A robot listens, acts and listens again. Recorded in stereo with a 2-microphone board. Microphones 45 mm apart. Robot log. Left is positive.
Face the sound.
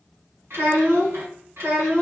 note: The child speaking: about 75° right or 105° right.
cmd yaw -75
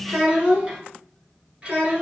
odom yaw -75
note: So it is at 30° right.
cmd yaw -30
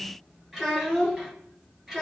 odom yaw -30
note: The child speaking is now 10° right.
cmd yaw -10
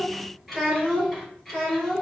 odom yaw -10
end: Facing the child speaking, 2 to 4 m away.